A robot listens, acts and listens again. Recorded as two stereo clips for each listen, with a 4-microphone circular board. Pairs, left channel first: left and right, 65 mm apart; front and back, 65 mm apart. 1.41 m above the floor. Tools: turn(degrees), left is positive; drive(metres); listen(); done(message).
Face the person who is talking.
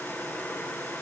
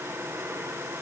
listen()
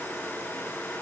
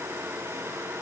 listen()
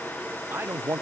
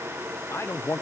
turn(degrees=-40)
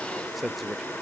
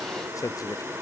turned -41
done("Facing the man speaking, under 1 m away.")